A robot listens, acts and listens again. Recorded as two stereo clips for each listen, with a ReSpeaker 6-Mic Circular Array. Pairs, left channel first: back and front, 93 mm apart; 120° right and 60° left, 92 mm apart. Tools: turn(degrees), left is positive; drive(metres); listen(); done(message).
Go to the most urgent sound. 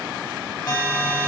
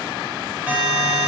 turn(degrees=135)
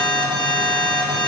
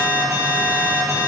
drive(metres=1.0)
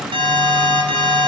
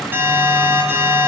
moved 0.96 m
drive(metres=1.0)
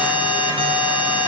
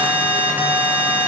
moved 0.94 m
turn(degrees=-10)
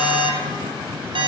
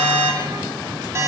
drive(metres=1.0)
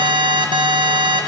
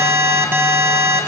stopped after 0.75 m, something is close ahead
done("Arrived at the alarm, straight ahead.")